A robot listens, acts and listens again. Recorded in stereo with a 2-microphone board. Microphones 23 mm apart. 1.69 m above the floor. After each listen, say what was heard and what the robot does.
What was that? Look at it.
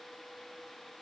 Keep listening.
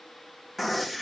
Turn 30° left.
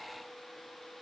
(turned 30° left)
Keep listening.
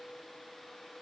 I heard a gunshot, but can't make it out now. It was about 30° right or 150° left.